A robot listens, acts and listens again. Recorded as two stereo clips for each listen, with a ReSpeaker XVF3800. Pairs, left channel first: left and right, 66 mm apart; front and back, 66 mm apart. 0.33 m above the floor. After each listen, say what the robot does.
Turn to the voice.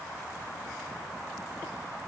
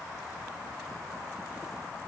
Keep listening.
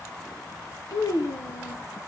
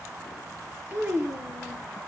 Turn 115° left.
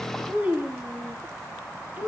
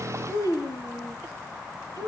Turn 25° right.
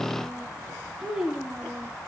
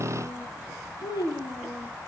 Turn 10° right.
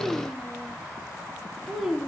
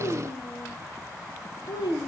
Facing the child speaking.